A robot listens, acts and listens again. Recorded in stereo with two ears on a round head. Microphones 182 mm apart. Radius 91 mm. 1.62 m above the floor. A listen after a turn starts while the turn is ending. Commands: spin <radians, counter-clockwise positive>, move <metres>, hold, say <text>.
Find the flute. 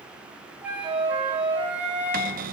spin -0.52
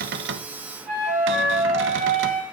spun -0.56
spin -2.44
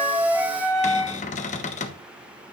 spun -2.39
say Found it: a flute, straight ahead.